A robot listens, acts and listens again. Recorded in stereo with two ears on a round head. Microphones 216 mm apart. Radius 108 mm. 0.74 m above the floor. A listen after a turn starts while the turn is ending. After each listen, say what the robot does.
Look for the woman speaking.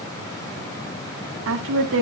Turn 55° right.
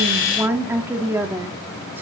Turn 10° right.
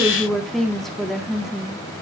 Found it: a woman speaking, straight ahead, 1 to 2 m away.